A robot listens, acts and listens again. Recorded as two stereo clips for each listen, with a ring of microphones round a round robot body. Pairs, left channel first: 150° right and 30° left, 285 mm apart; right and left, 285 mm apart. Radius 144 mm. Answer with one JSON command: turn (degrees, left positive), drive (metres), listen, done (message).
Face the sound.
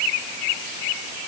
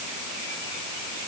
{"listen": true}
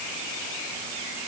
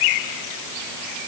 {"listen": true}
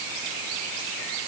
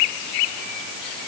{"done": "I can't make out anything."}